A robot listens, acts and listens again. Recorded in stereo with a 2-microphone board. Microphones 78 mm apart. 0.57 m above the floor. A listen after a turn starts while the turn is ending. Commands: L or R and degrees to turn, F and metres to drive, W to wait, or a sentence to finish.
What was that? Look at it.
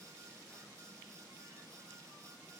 W
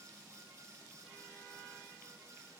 W
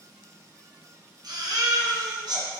R65
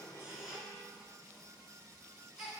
Facing the baby crying, 1 to 2 m away.